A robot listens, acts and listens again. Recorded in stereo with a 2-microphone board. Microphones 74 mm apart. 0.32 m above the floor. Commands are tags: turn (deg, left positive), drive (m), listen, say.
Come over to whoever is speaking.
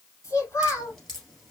<turn deg="40"/>
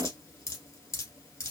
<listen/>
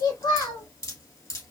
<turn deg="95"/>
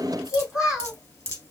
<turn deg="-10"/>
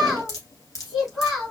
<drive m="1.0"/>
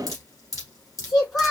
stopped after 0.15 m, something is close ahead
<say>Something is in my way. I am facing the child speaking but have not reached it.</say>